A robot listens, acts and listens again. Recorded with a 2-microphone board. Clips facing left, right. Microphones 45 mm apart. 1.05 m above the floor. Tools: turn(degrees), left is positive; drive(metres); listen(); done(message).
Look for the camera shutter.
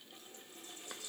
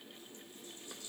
listen()
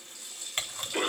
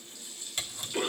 turn(degrees=40)
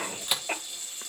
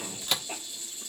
turn(degrees=10)
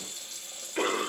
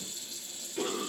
listen()
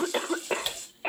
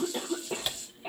done("Found it: a camera shutter, straight ahead, 1 to 2 m away.")